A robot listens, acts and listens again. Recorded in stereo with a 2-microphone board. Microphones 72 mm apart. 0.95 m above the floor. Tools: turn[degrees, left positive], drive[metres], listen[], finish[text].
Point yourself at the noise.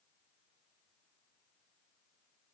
Action: listen[]
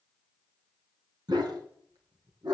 Action: turn[-90]
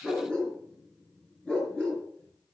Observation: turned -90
Thought: So it is at 15° left.
Action: turn[15]
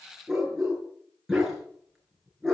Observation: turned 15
Action: finish[Facing the dog barking.]